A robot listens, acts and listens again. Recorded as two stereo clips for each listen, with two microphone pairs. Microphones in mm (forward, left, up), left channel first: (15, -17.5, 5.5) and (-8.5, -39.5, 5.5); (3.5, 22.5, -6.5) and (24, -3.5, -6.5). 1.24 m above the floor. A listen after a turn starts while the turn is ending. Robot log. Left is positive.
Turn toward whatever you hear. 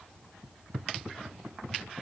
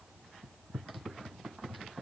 cmd idle
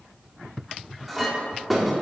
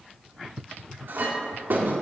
note: The clink: 55° right.
cmd yaw -55
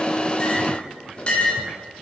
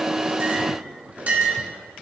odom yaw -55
note: The clink is now 15° right.
cmd yaw -15
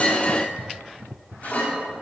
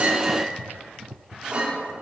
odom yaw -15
end: Facing the clink.